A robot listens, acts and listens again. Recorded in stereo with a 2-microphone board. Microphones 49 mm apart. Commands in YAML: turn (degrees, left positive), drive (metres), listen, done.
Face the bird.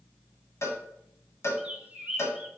turn: -25
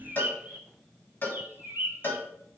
turn: -130
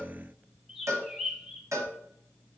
done: "Facing the bird."